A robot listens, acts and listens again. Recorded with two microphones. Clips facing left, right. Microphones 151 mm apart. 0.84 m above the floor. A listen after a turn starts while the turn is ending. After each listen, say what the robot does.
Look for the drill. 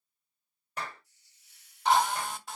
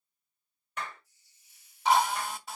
Turn 30° left.
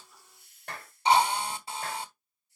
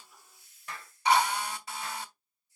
Turn 150° left.
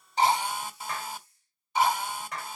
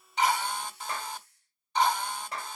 Facing the drill, 1 to 2 m away.